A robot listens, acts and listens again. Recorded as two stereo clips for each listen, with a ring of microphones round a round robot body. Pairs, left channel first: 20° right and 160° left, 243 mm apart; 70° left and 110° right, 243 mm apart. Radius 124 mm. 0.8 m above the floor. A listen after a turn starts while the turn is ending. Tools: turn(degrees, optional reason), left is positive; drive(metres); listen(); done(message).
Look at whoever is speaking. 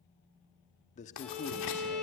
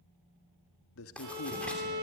turn(degrees=40, reason="The man speaking: 40° left.")
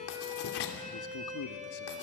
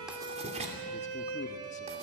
listen()
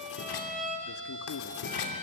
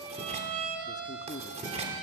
done("Found it: a man speaking, straight ahead, 1 to 2 m away.")